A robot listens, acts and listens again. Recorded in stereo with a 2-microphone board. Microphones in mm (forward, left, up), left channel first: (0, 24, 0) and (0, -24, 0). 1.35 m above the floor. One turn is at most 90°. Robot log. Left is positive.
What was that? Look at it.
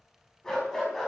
cmd yaw +30
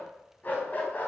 note: So it is at 145° left.
cmd yaw +90
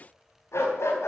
note: The dog barking is now 65° left.
cmd yaw +65
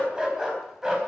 note: The dog barking is now 15° right.
cmd yaw -15
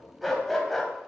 end: Found it: a dog barking, straight ahead, 2 to 4 m away.